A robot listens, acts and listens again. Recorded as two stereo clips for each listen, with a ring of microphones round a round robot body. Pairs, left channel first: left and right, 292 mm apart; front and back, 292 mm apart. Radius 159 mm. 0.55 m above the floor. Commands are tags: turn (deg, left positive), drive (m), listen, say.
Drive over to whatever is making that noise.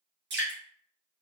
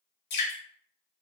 <turn deg="-40"/>
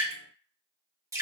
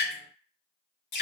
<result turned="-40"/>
<turn deg="-10"/>
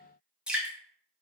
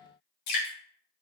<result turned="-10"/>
<drive m="1.0"/>
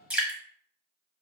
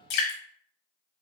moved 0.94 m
<drive m="1.0"/>
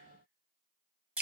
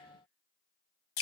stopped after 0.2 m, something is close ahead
<say>I am next to the dripping.</say>